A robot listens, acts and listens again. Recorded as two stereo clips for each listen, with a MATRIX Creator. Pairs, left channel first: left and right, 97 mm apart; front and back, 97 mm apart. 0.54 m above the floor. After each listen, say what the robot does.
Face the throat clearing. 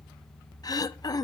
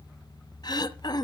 Turn 45° left.
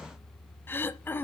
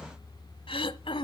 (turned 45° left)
Turn 20° left.
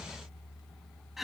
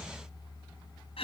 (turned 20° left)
Facing the throat clearing, under 1 m away.